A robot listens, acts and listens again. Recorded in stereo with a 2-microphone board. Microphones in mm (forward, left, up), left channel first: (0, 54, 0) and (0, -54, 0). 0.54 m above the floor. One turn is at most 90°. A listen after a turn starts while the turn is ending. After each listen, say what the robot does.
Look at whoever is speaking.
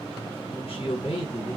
Turn 60° left.
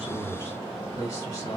Turn 30° left.
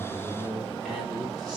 Found it: a man speaking, straight ahead, 1 to 2 m away.